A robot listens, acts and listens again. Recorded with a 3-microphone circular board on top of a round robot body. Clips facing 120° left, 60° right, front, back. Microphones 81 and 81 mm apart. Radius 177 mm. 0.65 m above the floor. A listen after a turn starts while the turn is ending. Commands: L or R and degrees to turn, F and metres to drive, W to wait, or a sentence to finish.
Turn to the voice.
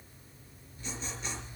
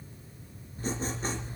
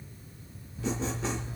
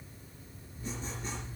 W
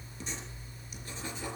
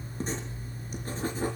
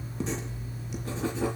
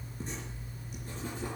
W
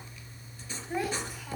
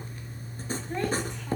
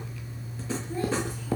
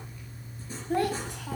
R155
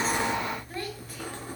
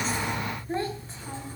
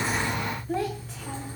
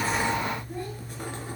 Facing the child speaking.